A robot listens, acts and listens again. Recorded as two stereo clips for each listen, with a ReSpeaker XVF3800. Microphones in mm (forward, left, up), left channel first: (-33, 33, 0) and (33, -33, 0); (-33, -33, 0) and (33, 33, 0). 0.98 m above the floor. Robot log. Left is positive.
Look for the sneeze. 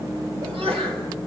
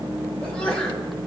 note: The sneeze: 55° right.
cmd yaw -55
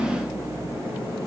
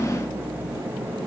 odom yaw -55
end: I heard a sneeze from this way, but can't make it out now.